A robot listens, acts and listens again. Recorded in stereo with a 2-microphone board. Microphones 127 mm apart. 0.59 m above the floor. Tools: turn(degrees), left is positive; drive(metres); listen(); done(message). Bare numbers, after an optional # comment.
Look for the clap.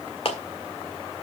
# The clap: about 50° left or 130° left.
turn(50)
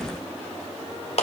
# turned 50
# So it is at 75° left.
turn(75)
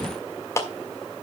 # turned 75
# The clap is now 30° left.
turn(30)
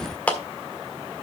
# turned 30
# The clap is now 15° left.
turn(15)
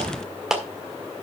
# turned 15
done("Facing the clap, 1 to 2 m away.")